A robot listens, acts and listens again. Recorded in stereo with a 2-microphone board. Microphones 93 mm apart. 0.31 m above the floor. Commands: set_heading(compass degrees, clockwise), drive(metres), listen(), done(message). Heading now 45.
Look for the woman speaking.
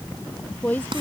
set_heading(30)
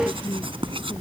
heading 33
listen()
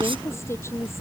listen()
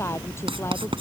done("I heard a woman speaking, but can't make it out now. It was about 5° left or 150° left.")